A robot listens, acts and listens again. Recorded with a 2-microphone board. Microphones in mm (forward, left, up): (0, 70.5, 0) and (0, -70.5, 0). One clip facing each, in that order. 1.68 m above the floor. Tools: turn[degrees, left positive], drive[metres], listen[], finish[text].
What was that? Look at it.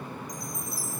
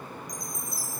Thought: The chime: about 65° left or 115° left.
Action: turn[65]
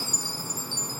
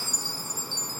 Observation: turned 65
Thought: So it is at 15° left.
Action: turn[15]
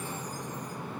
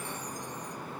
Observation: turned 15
Action: listen[]
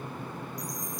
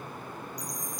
Action: finish[Facing the chime.]